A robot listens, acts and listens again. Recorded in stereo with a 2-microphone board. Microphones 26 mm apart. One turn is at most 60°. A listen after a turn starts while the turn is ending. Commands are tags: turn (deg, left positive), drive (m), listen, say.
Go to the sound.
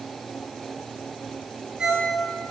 <turn deg="-25"/>
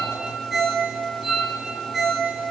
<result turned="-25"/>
<drive m="1.0"/>
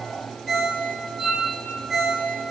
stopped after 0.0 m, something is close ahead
<say>Something is in my way. I am facing the ringtone but have not reached it.</say>